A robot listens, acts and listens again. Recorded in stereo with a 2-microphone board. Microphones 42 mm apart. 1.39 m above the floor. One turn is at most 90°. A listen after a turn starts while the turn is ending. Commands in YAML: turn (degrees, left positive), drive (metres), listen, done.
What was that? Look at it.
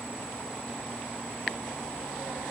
listen: true
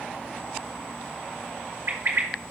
turn: -90
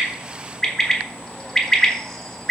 turn: 10
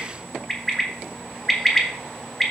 done: "Found it: a bird, straight ahead, 1 to 2 m away."